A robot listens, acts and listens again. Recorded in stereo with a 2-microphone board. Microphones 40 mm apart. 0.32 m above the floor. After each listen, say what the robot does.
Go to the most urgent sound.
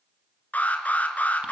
Turn 40° left.
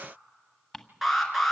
Drive 1.0 m forward.
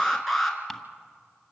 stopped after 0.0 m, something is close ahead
Blocked. The alarm is further on, straight ahead.